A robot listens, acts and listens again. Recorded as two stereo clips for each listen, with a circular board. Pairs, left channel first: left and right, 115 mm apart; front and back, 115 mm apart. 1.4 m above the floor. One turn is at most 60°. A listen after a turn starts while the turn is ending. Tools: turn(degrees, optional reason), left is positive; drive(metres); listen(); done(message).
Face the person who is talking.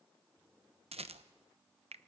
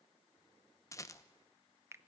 listen()
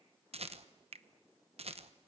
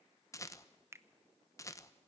listen()
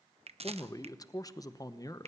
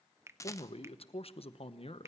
turn(degrees=35, reason="The man speaking: 35° left.")
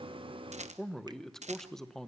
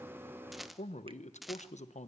done("Found it: a man speaking, straight ahead.")